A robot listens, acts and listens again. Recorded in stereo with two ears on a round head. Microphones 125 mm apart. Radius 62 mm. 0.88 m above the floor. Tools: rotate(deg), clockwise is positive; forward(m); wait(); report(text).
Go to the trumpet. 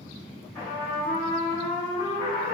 rotate(-30)
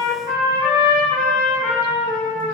rotate(30)
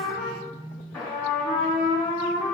forward(1.0)
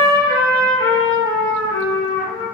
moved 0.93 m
rotate(-10)
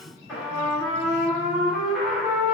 forward(1.0)
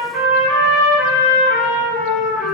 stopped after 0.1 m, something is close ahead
report("I am next to the trumpet.")